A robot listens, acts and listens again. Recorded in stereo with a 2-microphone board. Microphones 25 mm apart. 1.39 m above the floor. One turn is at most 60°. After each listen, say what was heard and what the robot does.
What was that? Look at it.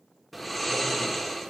Turn 30° left.
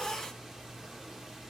So it is at 30° right. Turn 30° right.
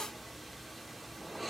Found it: snoring, straight ahead, 1 to 2 m away.